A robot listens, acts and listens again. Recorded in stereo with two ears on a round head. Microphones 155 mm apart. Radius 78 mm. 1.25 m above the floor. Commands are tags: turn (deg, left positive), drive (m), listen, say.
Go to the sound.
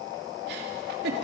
<turn deg="-70"/>
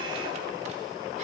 <listen/>
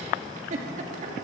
<turn deg="-40"/>
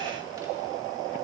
<listen/>
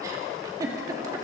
<turn deg="-20"/>
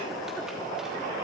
<listen/>
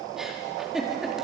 <drive m="1.0"/>
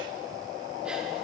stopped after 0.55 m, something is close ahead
<listen/>
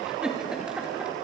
<say>Blocked. The giggle is further on, straight ahead.</say>